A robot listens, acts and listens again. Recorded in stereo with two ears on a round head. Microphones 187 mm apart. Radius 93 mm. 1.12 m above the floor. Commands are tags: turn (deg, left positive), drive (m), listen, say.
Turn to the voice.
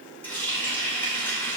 <listen/>
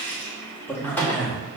<turn deg="30"/>
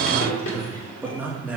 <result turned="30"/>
<say>Facing the man speaking, 1 to 2 m away.</say>